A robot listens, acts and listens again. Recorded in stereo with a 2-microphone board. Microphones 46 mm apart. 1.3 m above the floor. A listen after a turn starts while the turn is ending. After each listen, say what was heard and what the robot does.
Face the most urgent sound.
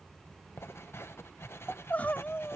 The crying: about 35° left or 145° left. Turn 35° left.
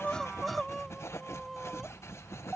Facing the crying.